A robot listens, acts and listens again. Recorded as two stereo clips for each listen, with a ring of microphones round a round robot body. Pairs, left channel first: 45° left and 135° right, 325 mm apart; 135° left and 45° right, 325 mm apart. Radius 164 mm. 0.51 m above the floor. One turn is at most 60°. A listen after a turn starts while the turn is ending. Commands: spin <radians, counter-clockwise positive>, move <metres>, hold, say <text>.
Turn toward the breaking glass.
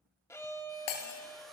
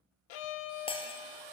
spin 1.05
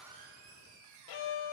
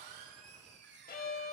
say Facing where the breaking glass came from. I can't hear it now.